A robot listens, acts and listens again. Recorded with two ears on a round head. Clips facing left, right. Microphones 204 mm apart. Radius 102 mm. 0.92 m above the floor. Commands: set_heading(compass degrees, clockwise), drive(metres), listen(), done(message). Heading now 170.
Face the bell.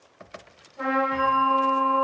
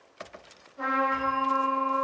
set_heading(155)
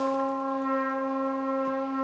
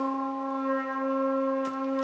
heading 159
listen()
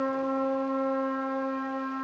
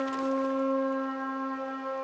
listen()
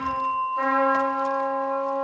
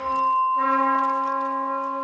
set_heading(9)
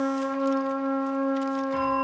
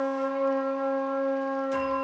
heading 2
set_heading(12)
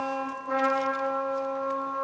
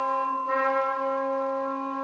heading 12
done("Facing the bell, 1 to 2 m away.")